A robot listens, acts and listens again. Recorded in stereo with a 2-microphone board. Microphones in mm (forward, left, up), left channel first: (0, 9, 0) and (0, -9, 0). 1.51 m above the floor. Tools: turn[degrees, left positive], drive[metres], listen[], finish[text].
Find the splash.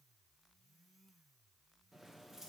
Action: listen[]
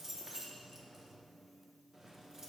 Action: listen[]
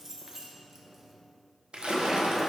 Thought: The splash: about 70° right or 110° right.
Action: turn[-70]
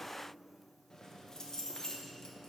Action: listen[]
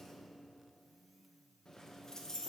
Action: finish[I heard a splash, but can't make it out now. It was about straight ahead or 40° right.]